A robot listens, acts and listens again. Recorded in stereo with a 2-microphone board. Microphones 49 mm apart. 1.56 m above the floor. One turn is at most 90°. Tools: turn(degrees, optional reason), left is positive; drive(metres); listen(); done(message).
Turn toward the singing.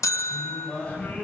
turn(degrees=25, reason="The singing: about 25° left or 155° left.")
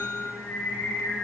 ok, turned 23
turn(degrees=90, reason="So it is at 135° left.")
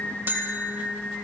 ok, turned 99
turn(degrees=45, reason="The singing is now 45° left.")
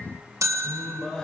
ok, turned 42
turn(degrees=10, reason="The singing is now 10° left.")
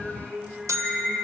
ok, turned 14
done("Found it: singing, straight ahead, over 4 m away.")